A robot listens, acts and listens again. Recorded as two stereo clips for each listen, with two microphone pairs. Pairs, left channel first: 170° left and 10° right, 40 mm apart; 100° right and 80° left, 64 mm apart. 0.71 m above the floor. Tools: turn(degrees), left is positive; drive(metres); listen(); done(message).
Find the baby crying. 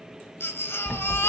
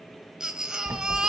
turn(degrees=160)
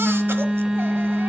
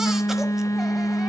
listen()
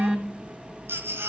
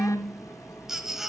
done("Found it: a baby crying, straight ahead, 1 to 2 m away.")